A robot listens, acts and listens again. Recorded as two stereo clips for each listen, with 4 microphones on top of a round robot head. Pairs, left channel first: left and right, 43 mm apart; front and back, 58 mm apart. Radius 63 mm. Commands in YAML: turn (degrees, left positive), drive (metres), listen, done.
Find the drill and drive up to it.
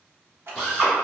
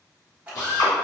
turn: 20
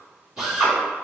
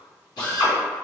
drive: 1.0
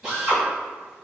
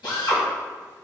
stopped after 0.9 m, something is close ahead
done: "Arrived at the drill, straight ahead."